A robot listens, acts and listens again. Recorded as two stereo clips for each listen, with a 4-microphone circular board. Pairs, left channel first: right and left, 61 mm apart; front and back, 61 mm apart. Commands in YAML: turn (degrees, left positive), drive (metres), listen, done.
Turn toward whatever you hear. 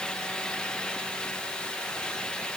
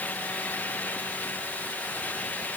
listen: true
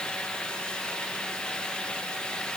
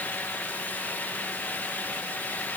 listen: true
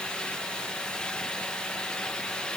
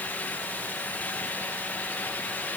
done: "I can't make out anything to turn to."